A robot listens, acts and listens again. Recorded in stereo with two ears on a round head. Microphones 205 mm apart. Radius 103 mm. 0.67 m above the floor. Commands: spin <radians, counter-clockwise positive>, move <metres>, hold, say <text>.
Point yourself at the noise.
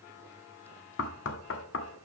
spin 1.05
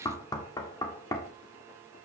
spin 0.35
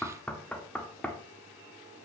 say Facing the knocking.